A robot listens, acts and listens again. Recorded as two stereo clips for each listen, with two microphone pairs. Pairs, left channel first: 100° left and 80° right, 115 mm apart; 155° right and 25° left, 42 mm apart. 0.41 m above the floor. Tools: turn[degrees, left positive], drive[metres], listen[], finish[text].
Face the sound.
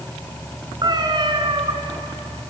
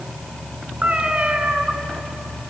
Thought: The cat meowing: 40° right.
Action: turn[-40]
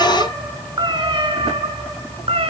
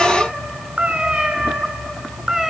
Thought: The cat meowing is now 55° right.
Action: turn[-55]
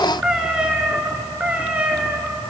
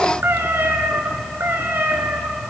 Action: finish[Found it: a cat meowing, straight ahead, 2 to 4 m away.]